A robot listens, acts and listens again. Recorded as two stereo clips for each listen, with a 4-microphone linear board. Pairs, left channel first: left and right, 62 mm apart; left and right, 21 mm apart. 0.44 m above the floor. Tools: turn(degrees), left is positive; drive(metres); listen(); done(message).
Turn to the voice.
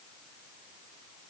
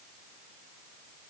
listen()
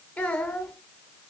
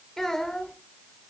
turn(degrees=30)
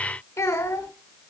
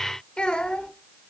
turn(degrees=120)
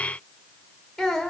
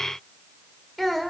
done("Facing the child speaking.")